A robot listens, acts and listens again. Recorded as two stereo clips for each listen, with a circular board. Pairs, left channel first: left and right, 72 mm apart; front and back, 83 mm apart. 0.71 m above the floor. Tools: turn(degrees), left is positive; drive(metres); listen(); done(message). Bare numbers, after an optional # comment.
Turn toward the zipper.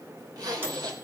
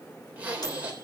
# The zipper: 110° right.
turn(-110)
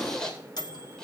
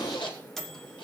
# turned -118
# The zipper is now 10° left.
turn(10)
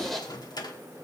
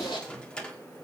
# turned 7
done("Facing the zipper, 2 to 4 m away.")